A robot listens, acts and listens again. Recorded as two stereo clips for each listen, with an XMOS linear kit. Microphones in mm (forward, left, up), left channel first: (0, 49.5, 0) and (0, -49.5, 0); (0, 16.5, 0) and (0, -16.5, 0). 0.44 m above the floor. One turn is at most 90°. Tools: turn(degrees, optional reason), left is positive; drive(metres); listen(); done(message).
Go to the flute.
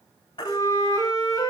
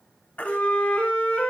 turn(degrees=40, reason="The flute: about 40° left or 140° left.")
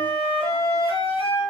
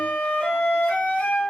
turn(degrees=90, reason="So it is at 100° left.")
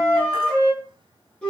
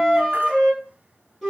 turn(degrees=10, reason="The flute is now 10° left.")
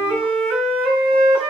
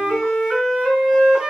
drive(metres=1.0)
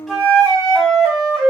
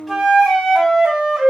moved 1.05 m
drive(metres=1.0)
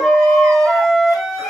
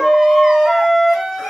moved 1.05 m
drive(metres=1.0)
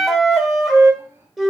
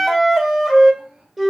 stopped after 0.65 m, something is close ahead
done("Arrived at the flute, straight ahead.")